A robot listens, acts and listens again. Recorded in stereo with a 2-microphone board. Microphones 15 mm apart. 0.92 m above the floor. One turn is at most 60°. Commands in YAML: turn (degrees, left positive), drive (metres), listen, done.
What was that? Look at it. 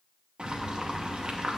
turn: -60
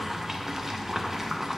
turn: -20
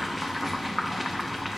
done: "Facing the boiling, under 1 m away."